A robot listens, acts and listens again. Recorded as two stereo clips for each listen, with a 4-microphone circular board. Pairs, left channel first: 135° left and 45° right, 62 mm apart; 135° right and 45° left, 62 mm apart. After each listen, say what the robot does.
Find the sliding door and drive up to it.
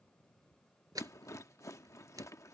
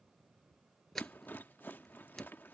Turn 50° right.
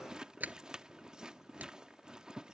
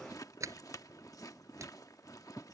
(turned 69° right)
Turn 15° left.
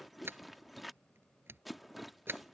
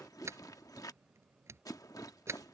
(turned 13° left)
Drive 1.0 m forward.
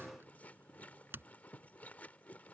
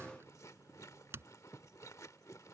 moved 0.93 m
Drive 1.0 m forward.
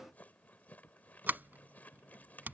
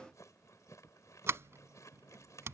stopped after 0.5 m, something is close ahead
Turn 10° left.
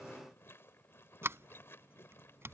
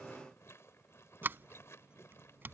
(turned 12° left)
I am next to the sliding door.